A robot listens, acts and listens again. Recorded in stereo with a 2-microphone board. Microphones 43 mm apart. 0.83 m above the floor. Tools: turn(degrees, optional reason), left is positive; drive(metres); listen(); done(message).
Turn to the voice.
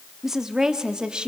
turn(degrees=-20, reason="The woman speaking: about 20° right or 160° right.")
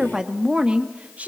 turn(degrees=-35, reason="The woman speaking: about 35° right or 145° right.")
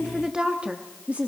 turn(degrees=-35, reason="The woman speaking: about 35° right or 145° right.")
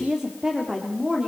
turn(degrees=-20, reason="The woman speaking: about 20° right or 160° right.")
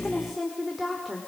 done("Facing the woman speaking.")